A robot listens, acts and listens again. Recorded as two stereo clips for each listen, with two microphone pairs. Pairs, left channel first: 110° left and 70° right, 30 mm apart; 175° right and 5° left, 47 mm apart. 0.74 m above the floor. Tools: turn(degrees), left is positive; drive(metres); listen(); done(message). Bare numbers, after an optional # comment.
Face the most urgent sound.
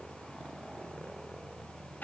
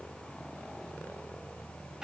listen()
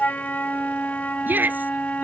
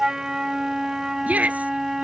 # The shout: 55° right.
turn(-55)
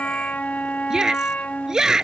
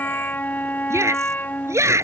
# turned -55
done("Found it: a shout, straight ahead.")